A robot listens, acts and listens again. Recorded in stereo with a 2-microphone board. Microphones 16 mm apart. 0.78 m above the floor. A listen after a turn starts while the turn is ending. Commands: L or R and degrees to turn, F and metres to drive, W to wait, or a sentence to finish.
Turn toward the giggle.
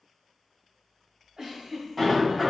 R40
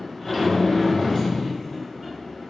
W
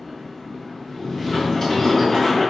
W
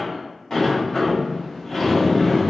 I heard a giggle, but can't make it out now. It was about straight ahead or 100° right.